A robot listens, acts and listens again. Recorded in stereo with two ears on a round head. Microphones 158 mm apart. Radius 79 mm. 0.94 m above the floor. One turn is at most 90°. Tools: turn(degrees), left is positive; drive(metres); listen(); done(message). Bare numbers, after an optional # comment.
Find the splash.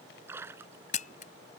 turn(-30)
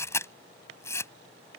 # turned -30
listen()
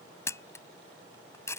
done("I heard a splash, but can't make it out now. It was about 15° left or 135° right.")